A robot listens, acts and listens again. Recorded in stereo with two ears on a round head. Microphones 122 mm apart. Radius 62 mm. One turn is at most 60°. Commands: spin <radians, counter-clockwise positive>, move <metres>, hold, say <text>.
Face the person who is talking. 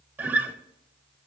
hold
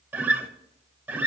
hold
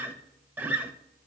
say I can't make out anyone speaking to turn to.